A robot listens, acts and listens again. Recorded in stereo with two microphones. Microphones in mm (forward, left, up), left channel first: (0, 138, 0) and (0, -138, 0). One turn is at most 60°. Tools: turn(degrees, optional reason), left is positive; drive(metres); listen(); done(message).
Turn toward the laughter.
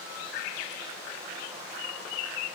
listen()
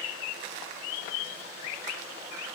listen()
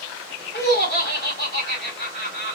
turn(degrees=35, reason="The laughter: about 35° left or 145° left.")
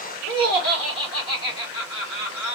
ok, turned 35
turn(degrees=60, reason="So it is at 105° left.")
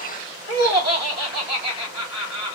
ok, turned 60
turn(degrees=60, reason="The laughter is now 75° left.")
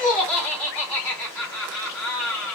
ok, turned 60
done("Found it: laughter, straight ahead.")